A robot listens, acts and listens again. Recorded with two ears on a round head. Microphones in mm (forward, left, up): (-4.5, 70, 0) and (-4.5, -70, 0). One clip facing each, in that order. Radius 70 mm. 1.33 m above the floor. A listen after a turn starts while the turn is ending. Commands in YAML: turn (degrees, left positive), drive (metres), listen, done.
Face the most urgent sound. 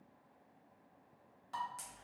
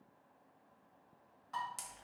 listen: true
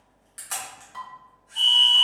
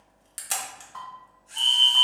turn: 35
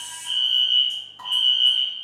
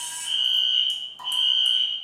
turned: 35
done: "Facing the fire alarm."